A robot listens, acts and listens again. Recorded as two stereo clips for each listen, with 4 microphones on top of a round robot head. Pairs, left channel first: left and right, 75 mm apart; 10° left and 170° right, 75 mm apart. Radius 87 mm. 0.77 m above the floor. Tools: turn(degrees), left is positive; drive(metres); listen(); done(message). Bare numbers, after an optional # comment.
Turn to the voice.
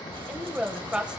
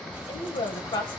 # The woman speaking: 15° right.
turn(-15)
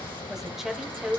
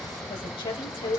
done("Facing the woman speaking, 2 to 4 m away.")